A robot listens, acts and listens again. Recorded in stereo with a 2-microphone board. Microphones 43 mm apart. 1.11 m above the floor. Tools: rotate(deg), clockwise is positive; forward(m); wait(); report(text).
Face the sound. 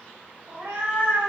rotate(40)
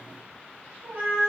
rotate(90)
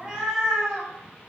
rotate(10)
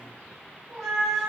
report("Facing the cat meowing.")